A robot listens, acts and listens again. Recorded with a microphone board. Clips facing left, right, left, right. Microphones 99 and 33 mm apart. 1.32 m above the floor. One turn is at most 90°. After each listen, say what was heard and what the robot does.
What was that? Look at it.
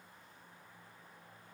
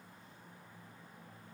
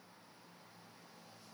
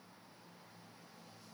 Keep listening.
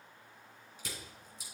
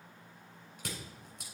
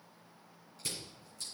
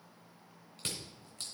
The crushing: about 60° right or 120° right. Turn 60° right.
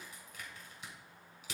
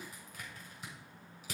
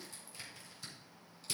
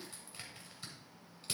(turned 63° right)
So it is at 45° right. Turn 45° right.
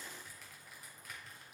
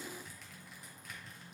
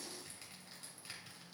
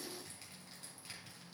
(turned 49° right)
Found it: crushing, straight ahead.